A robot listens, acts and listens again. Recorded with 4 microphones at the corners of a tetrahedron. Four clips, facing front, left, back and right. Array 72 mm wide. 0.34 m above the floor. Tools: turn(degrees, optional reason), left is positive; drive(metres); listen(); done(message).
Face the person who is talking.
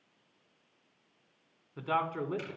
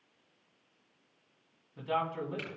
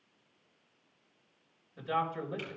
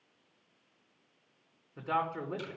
turn(degrees=-15, reason="The man speaking: 15° right.")
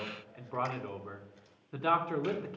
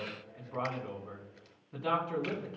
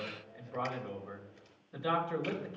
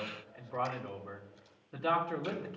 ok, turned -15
done("Facing the man speaking, 2 to 4 m away.")